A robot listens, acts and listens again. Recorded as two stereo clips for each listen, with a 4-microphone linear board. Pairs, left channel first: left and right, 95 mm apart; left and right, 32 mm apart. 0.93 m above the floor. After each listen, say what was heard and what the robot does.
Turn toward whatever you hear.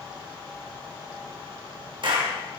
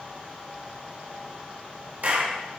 The clap: about 55° right or 125° right. Turn 55° right.
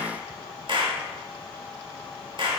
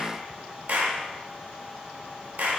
So it is at 65° right. Turn 65° right.
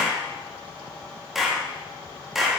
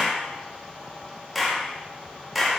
Facing the clap.